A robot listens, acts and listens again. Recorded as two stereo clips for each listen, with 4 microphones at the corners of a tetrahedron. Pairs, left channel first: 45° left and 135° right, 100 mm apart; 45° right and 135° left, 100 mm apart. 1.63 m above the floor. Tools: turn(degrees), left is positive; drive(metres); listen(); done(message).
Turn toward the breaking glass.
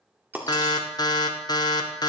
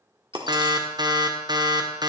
turn(degrees=160)
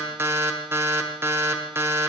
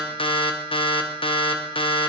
done("I heard breaking glass from this way, but can't make it out now.")